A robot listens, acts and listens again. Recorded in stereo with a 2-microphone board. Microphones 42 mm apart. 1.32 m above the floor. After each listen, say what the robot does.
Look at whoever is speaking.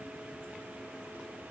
Keep listening.
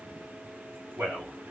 Turn 60° right.
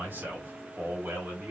Turn 55° right.
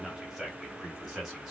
Turn 10° right.
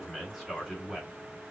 Facing the man speaking, 2 to 4 m away.